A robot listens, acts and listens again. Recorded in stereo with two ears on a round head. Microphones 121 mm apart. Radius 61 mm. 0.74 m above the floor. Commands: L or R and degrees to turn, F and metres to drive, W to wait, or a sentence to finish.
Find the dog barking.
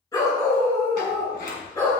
L25
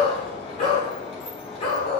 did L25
L135
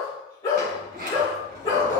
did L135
L25
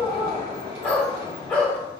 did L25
L10
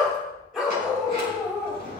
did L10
Found it: a dog barking, straight ahead.